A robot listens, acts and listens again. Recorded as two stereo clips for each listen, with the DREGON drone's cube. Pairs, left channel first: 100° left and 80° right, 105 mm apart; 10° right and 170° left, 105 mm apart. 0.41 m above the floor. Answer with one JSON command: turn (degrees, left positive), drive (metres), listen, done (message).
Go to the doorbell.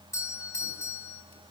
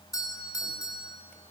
{"turn": 40}
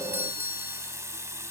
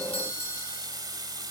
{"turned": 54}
{"turn": -15}
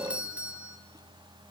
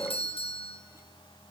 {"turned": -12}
{"drive": 1.0}
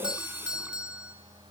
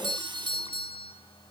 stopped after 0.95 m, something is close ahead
{"done": "Something is in my way. I am facing the doorbell but have not reached it."}